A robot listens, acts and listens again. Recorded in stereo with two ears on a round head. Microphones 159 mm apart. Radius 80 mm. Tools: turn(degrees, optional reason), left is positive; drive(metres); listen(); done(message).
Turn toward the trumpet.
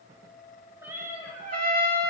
turn(degrees=-55, reason="The trumpet: about 55° right or 125° right.")
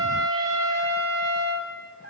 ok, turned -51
turn(degrees=-75, reason="So it is at 75° right.")
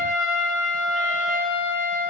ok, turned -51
turn(degrees=-25, reason="The trumpet is now 25° right.")
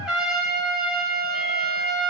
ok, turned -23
done("Found it: a trumpet, straight ahead, 2 to 4 m away.")